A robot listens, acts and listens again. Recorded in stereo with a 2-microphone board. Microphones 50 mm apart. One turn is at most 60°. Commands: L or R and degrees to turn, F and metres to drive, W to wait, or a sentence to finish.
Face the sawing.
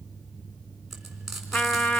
W
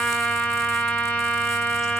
W
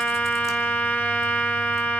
I can't make out sawing to turn to.